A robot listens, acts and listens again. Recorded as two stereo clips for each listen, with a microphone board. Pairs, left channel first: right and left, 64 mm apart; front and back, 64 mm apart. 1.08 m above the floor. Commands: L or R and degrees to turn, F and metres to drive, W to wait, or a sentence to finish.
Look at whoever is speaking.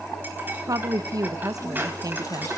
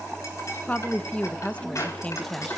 L70
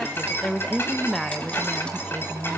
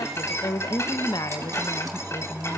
Facing the woman speaking, under 1 m away.